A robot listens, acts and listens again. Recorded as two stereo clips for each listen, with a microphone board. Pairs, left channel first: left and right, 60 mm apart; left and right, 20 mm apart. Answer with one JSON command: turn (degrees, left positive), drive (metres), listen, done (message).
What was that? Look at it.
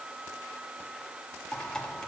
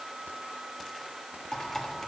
{"turn": 30}
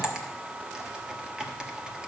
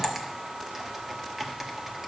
{"turn": -15}
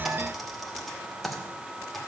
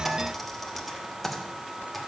{"done": "Facing the typing on a keyboard."}